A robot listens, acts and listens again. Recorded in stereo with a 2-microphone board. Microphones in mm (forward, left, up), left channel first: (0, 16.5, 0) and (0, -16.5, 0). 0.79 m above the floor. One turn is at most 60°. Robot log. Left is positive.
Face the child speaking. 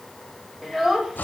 cmd yaw -30
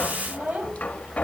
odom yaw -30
note: So it is at 135° right.
cmd yaw -60
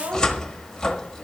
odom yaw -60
note: The child speaking is now 80° right.
cmd yaw -60
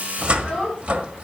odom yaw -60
note: The child speaking is now 25° right.
cmd yaw -25
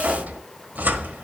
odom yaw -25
cmd idle
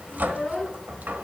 note: The child speaking is now 10° left.
cmd yaw +10
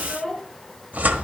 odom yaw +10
end: Facing the child speaking, over 4 m away.